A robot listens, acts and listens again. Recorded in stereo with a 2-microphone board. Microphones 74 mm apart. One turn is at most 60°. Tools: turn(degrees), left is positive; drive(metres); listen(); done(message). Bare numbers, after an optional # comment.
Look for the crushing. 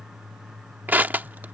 # The crushing: about 25° right or 155° right.
turn(-25)
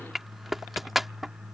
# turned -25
done("Found it: crushing, straight ahead.")